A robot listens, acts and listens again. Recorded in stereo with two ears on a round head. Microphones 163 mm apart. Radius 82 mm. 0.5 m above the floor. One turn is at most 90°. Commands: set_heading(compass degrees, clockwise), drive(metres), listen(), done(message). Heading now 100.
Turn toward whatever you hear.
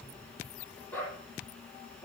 set_heading(70)
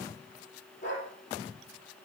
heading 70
set_heading(340)
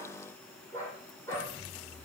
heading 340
set_heading(325)
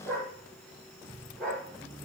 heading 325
done("Facing the dog barking, over 4 m away.")